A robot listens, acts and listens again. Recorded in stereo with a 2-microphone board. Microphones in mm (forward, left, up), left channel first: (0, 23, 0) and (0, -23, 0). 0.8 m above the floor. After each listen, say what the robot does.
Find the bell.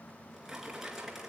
Keep listening.
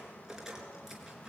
Keep listening.
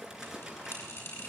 Turn 90° left.
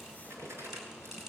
Keep listening.
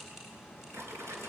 Facing the bell.